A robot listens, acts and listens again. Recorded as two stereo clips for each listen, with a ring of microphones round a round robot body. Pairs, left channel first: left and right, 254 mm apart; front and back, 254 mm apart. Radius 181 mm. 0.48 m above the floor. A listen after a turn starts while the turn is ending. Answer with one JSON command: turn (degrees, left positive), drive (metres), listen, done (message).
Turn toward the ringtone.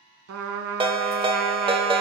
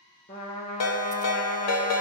{"turn": -20}
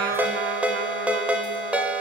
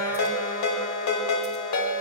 {"done": "Facing the ringtone, 1 to 2 m away."}